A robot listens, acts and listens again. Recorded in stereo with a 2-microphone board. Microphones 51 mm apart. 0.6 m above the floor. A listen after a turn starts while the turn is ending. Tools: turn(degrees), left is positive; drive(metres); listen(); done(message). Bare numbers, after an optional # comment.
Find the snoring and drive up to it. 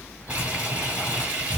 # The snoring: about 40° right or 140° right.
turn(-40)
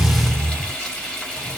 # So it is at 90° right.
turn(-90)
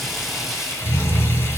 # The snoring is now 10° left.
turn(10)
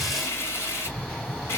drive(1.0)
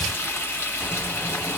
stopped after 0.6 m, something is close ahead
listen()
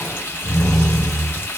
done("Arrived at the snoring, straight ahead.")